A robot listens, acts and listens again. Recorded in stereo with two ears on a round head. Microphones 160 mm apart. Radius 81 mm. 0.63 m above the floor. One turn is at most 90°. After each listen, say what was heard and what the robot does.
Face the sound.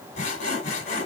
The sawing: about 40° left or 140° left. Turn 40° left.
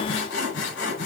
So it is at 100° left. Turn 90° left.
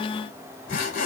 The sawing is now 55° left. Turn 55° left.
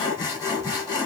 The sawing is now 20° left. Turn 20° left.
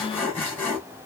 The sawing is now 10° left. Turn 10° left.
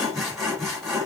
Facing the sawing.